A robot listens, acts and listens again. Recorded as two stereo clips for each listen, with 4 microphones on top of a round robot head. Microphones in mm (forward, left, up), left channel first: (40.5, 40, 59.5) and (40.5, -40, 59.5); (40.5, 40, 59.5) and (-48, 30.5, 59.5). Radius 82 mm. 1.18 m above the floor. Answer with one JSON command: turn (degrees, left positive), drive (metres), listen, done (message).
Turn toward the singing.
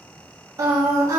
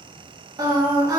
{"turn": -135}
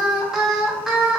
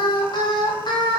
{"done": "Found it: singing, straight ahead, under 1 m away."}